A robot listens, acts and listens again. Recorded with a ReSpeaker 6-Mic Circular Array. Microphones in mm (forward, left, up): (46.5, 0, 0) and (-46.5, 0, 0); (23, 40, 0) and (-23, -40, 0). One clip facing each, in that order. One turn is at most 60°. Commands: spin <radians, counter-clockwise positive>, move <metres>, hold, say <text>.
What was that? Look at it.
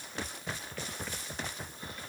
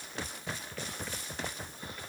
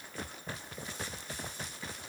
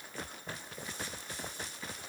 hold
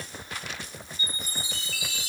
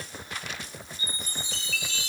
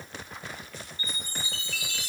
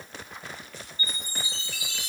spin 1.05
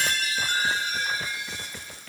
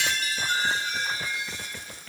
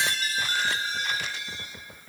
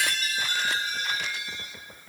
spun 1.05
spin 0.17
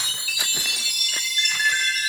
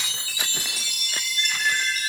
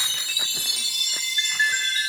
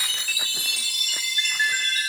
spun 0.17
say Facing the chime.